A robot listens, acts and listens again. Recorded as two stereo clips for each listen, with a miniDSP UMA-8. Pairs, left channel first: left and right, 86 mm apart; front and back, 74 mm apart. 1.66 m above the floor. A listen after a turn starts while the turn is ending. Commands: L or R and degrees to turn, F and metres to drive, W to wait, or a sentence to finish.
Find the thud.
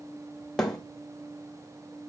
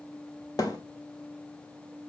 Facing the thud, 2 to 4 m away.